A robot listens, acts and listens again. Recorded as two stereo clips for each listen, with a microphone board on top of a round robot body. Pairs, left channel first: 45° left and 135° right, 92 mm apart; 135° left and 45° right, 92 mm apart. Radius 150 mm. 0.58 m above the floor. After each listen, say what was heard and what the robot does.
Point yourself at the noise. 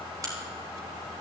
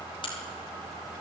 The crack: 170° left. Turn 170° left.
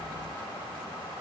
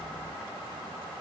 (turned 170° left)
Facing where the crack came from. I can't hear it now.